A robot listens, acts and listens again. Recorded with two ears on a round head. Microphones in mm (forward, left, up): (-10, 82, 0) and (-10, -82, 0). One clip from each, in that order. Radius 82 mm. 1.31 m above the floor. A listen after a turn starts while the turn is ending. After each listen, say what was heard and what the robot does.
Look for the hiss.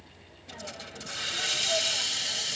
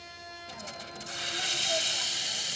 Turn 30° left.
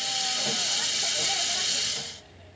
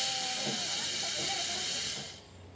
So it is at 145° left. Turn 145° left.
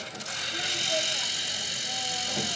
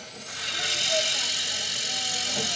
The hiss is now 10° right. Turn 10° right.
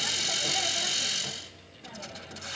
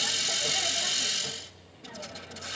Found it: a hiss, straight ahead.